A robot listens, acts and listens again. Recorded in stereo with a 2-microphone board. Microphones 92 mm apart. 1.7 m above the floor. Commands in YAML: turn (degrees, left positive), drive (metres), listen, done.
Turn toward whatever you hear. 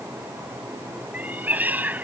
turn: -20
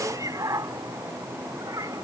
turn: -140
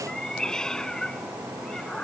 done: "Found it: a cat meowing, straight ahead."